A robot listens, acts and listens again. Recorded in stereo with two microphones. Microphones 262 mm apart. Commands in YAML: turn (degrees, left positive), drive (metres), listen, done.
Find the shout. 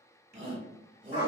turn: -25
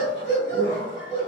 listen: true
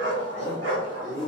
done: "Facing the shout, 1 to 2 m away."